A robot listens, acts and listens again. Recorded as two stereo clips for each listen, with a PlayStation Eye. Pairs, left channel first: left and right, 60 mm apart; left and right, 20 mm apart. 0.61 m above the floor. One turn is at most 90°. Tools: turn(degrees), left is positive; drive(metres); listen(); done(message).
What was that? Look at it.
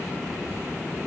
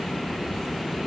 listen()
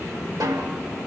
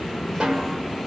turn(degrees=-70)
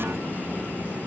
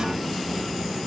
listen()
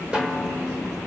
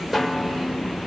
turn(degrees=-15)
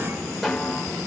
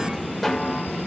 done("Found it: a snare drum, straight ahead, 1 to 2 m away.")